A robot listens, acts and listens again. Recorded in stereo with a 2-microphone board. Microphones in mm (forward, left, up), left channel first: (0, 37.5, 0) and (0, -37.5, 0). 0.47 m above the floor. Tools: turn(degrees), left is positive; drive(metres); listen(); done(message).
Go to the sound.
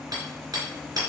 turn(degrees=-65)
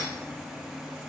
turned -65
listen()
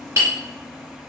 turn(degrees=-45)
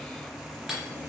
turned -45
listen()
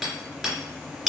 drive(metres=1.0)
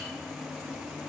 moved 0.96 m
listen()
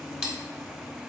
drive(metres=1.0)
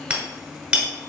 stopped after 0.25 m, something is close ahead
turn(degrees=-15)
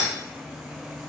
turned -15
listen()
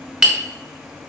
done("I am next to the hammering.")